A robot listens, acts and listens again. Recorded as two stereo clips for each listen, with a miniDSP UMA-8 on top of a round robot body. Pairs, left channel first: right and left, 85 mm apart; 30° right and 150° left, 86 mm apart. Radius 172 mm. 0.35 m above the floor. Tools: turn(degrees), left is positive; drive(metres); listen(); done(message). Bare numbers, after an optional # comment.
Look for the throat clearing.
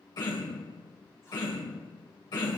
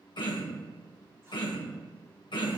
# The throat clearing: 55° right.
turn(-55)
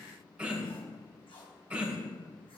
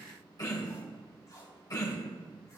# The throat clearing is now 15° left.
turn(15)
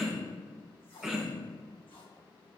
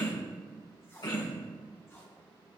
done("Facing the throat clearing, 1 to 2 m away.")